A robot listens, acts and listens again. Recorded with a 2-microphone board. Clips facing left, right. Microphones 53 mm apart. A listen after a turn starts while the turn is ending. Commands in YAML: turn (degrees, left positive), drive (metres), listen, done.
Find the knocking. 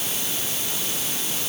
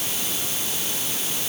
listen: true
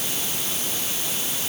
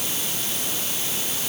listen: true
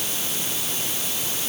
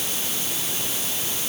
done: "I can't make out knocking."